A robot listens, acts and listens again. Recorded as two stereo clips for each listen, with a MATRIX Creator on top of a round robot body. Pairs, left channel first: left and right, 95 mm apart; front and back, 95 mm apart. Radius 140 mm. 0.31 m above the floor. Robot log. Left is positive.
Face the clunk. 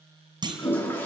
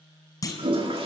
note: The clunk: 50° right.
cmd yaw -50
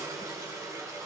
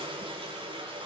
end: Facing where the clunk came from. I can't hear it now.